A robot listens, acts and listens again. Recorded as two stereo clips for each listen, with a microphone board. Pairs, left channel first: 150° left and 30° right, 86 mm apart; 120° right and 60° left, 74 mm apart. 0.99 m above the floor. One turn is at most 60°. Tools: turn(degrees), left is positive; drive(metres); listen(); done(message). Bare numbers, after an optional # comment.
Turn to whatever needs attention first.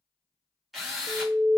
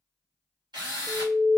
done("Facing the alarm, under 1 m away.")